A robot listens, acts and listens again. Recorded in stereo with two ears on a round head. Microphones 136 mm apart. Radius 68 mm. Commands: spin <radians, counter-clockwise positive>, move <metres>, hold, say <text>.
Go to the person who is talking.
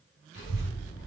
spin 1.57
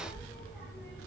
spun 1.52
spin 0.17
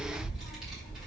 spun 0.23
move 1.0
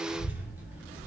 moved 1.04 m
spin -0.17
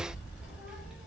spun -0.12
move 1.0
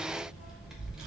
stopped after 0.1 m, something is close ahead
say I am next to the child speaking.